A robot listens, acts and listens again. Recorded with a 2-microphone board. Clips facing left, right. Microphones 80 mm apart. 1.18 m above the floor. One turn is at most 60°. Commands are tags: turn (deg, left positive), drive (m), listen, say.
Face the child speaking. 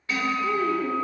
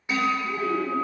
<turn deg="60"/>
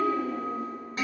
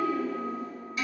<turn deg="60"/>
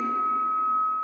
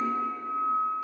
<listen/>
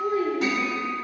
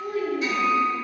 <turn deg="35"/>
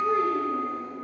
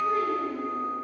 <listen/>
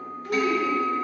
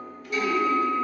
<turn deg="35"/>
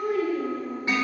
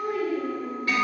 <say>Facing the child speaking.</say>